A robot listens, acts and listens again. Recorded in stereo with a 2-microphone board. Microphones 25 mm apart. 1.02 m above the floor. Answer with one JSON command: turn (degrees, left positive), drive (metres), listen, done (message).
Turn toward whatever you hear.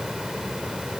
{"listen": true}
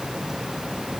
{"listen": true}
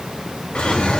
{"turn": 90}
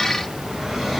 {"done": "Found it: a drawer, straight ahead."}